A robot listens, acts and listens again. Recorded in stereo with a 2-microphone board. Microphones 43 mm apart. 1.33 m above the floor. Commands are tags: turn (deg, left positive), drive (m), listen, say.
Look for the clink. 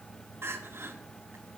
<listen/>
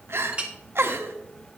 <turn deg="-20"/>
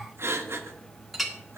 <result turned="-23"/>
<say>Found it: a clink, straight ahead.</say>